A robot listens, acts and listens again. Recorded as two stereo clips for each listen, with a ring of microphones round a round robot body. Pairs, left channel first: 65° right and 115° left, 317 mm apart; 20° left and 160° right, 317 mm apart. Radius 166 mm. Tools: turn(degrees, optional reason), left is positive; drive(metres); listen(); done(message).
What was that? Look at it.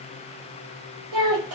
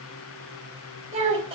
turn(degrees=130, reason="The child speaking: 130° left.")
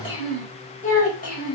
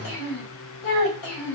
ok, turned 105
done("Found it: a child speaking, straight ahead.")